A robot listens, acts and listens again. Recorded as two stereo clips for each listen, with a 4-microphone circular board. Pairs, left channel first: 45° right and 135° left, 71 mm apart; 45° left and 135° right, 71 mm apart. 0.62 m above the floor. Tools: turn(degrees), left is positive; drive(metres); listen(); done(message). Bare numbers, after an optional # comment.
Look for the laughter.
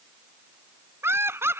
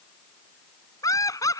# The laughter: 85° left.
turn(85)
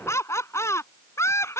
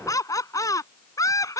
done("Found it: laughter, straight ahead.")